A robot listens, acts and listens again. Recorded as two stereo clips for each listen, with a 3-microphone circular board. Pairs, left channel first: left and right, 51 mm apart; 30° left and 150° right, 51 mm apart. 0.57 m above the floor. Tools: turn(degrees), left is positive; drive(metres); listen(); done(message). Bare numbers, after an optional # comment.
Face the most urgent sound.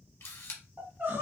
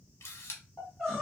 # The crying: 50° right.
turn(-50)
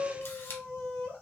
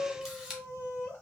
# The crying is now 20° left.
turn(20)
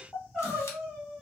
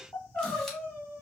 done("Facing the crying, 1 to 2 m away.")